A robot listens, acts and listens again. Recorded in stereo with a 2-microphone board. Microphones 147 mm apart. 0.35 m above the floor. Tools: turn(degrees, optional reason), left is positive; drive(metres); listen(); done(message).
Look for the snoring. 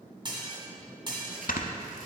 turn(degrees=65, reason="The snoring: about 65° left or 115° left.")
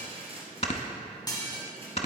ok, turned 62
turn(degrees=50, reason="So it is at 50° left.")
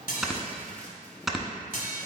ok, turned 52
done("Facing the snoring, under 1 m away.")